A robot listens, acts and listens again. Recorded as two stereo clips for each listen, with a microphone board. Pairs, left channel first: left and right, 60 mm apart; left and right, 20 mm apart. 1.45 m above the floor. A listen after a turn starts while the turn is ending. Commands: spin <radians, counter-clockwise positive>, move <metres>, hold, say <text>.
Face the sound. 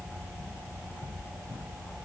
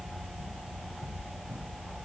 hold
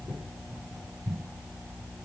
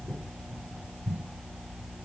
hold
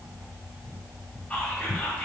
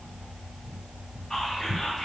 spin 0.35
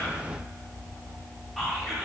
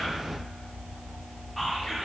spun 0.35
say Found it: whispering, straight ahead.